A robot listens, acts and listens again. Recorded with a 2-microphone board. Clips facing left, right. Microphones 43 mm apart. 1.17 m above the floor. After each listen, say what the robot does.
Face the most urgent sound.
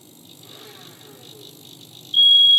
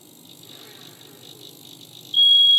Turn 25° left.
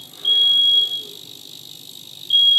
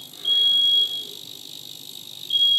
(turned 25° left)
Turn 125° left.
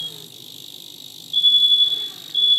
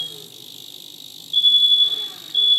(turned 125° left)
Turn 15° right.
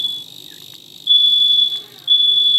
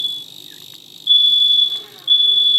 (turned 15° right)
Turn 10° right.
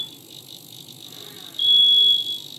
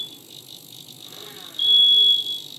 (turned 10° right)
Found it: a fire alarm, straight ahead.